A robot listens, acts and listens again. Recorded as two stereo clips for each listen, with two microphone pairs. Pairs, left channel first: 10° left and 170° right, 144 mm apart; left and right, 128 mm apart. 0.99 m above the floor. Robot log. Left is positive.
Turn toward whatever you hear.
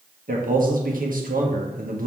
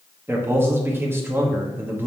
note: The man speaking: 160° right.
cmd yaw -160
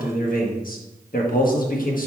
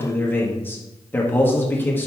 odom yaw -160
note: The man speaking is now 15° left.
cmd yaw +15
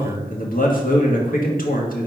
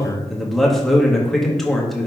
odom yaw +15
end: Facing the man speaking.